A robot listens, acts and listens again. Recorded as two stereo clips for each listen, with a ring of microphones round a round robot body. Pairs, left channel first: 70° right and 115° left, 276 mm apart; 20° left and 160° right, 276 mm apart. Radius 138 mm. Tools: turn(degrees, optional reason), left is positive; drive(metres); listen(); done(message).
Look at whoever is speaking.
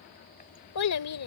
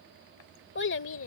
turn(degrees=-25, reason="The child speaking: 25° right.")
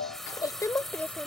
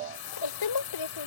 turn(degrees=20, reason="The child speaking is now 20° left.")
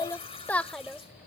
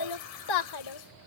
turn(degrees=25, reason="The child speaking is now 25° left.")
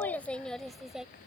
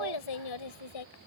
turn(degrees=25, reason="The child speaking is now 25° left.")
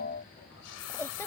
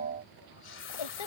turn(degrees=15, reason="The child speaking is now 15° left.")
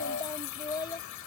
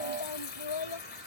turn(degrees=10, reason="The child speaking is now 10° left.")
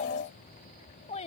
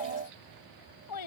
done("Found it: a child speaking, straight ahead.")